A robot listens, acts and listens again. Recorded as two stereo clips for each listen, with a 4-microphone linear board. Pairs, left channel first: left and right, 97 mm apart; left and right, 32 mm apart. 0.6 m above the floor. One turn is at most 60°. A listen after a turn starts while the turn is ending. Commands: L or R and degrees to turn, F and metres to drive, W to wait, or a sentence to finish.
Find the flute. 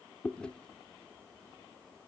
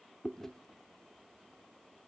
W
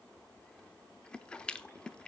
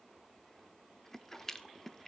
W
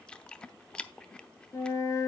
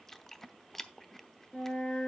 L30
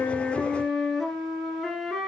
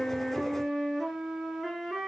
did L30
Found it: a flute, straight ahead, 2 to 4 m away.